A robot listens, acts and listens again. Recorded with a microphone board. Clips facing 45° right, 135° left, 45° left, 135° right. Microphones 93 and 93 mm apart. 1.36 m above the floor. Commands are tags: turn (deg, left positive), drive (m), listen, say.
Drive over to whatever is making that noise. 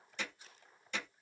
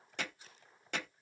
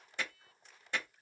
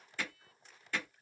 <turn deg="110"/>
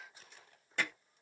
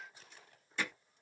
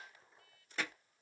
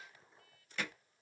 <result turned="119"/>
<turn deg="-10"/>
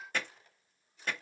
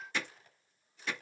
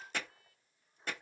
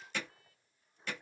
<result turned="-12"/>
<drive m="1.0"/>
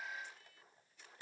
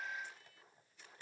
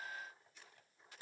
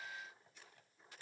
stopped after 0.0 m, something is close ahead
<say>Something is in my way. I am facing the hammering but have not reached it.</say>